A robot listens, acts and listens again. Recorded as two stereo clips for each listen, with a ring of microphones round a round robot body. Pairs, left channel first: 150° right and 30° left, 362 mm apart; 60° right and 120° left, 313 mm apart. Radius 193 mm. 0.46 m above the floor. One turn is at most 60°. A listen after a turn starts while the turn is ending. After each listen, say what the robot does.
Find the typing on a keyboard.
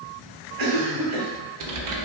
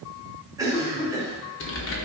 Turn 10° right.
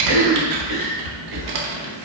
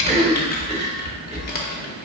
Facing the typing on a keyboard, under 1 m away.